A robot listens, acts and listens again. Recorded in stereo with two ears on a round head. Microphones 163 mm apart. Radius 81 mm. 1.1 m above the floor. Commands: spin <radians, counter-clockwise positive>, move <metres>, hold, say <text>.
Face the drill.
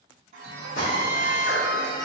spin 0.96
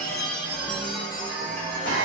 spin 1.22
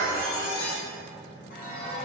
hold
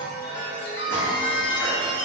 spin 0.26
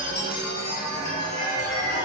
hold
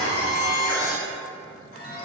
say Found it: a drill, straight ahead, 2 to 4 m away.